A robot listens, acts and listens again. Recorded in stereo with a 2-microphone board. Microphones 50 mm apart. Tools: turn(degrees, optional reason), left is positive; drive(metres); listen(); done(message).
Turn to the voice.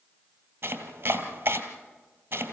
listen()
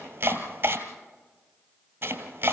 listen()
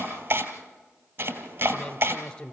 turn(degrees=25, reason="The man speaking: about 25° left or 155° left.")
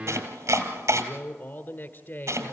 turn(degrees=130, reason="So it is at 130° left.")
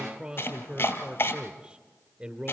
turn(degrees=-25, reason="The man speaking is now 25° right.")
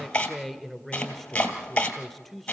done("Facing the man speaking.")